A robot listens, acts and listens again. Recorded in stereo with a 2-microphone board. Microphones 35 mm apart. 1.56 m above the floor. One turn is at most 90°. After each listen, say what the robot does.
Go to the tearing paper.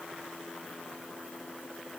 Keep listening.
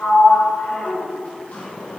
Keep listening.
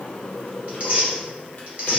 Turn 40° right.
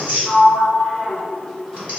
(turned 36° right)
Turn 90° right.
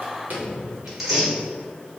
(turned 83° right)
Turn 10° right.
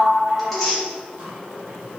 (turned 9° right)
Drive 1.0 m forward.
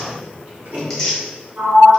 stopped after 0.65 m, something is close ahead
Turn 10° left.
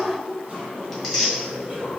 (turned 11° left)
Arrived at the tearing paper, straight ahead.